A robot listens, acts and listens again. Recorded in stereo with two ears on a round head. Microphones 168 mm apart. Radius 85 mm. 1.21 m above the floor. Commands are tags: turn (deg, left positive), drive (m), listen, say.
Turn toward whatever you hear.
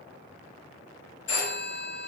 <turn deg="65"/>
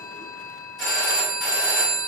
<say>Found it: a phone ringing, straight ahead.</say>